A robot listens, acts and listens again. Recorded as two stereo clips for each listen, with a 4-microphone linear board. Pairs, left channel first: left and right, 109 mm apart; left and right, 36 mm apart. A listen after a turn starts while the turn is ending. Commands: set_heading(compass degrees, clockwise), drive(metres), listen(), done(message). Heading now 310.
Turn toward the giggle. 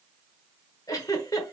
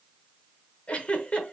set_heading(280)
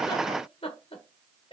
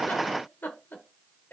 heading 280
set_heading(165)
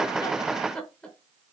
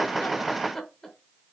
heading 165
set_heading(155)
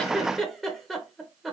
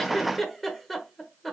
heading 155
done("Found it: a giggle, straight ahead.")